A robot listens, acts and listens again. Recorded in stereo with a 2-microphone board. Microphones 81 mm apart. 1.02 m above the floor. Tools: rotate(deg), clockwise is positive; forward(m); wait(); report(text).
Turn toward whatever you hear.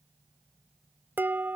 rotate(25)
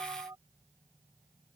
rotate(130)
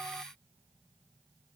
wait()
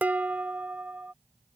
rotate(20)
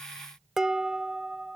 report("Found it: dishes clattering, straight ahead.")